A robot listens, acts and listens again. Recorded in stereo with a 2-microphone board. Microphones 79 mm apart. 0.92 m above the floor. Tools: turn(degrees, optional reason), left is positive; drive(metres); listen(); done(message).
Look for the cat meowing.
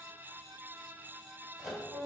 listen()
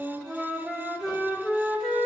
listen()
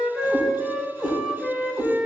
turn(degrees=-50, reason="The cat meowing: about 50° right or 130° right.")
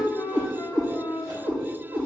turn(degrees=-80, reason="So it is at 80° right.")
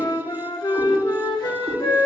listen()
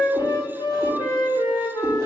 listen()
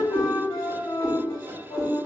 turn(degrees=-15, reason="The cat meowing is now 15° right.")
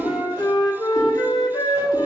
done("Found it: a cat meowing, straight ahead.")